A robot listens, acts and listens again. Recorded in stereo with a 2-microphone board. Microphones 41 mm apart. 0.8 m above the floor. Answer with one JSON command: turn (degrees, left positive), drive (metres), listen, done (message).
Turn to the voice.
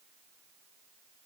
{"listen": true}
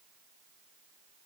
{"listen": true}
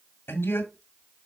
{"turn": 65}
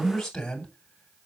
{"turn": 15}
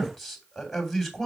{"done": "Facing the man speaking."}